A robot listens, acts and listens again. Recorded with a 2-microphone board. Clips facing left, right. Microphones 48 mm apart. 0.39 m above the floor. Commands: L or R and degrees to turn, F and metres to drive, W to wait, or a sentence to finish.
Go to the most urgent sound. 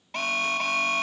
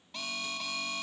L60
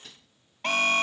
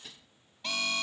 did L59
L55
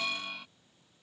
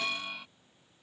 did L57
F1.0
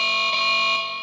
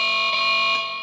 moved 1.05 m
F1.0
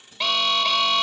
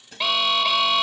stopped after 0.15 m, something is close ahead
I am next to the alarm.